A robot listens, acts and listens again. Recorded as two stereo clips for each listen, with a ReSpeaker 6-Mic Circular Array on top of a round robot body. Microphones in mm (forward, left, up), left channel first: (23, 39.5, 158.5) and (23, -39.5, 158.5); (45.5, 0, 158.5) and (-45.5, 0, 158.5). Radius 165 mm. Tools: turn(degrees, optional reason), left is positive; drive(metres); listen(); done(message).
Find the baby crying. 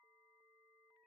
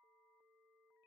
listen()
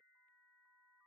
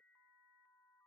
listen()
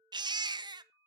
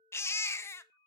turn(degrees=-65, reason="The baby crying: 65° right.")
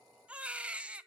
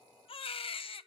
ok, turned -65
turn(degrees=-15, reason="The baby crying is now 15° right.")
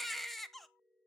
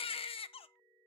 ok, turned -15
done("Found it: a baby crying, straight ahead, under 1 m away.")